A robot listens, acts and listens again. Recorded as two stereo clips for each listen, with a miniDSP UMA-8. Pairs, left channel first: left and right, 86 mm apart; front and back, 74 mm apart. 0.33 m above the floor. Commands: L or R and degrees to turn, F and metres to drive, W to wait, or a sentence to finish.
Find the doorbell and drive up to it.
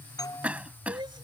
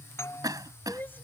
L50
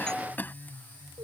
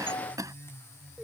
F1.0
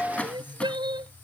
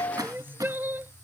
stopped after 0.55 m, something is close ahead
L15
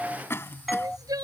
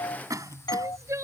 Blocked. The doorbell is further on, straight ahead.